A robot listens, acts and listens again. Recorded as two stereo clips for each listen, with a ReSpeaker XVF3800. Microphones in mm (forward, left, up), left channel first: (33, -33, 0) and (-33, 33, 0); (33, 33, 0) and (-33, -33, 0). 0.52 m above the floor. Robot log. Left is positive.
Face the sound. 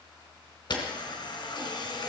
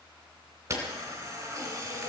note: The camera shutter: 75° right.
cmd yaw -75
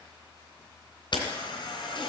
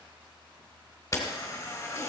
note: The camera shutter is now 10° right.
cmd yaw -10
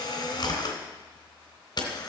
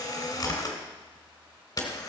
end: Found it: a camera shutter, straight ahead.